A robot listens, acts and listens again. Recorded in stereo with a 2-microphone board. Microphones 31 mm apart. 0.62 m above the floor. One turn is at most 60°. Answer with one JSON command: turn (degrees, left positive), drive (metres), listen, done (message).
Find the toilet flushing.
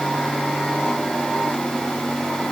{"listen": true}
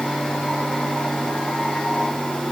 {"listen": true}
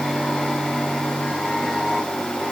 {"done": "I can't make out a toilet flushing."}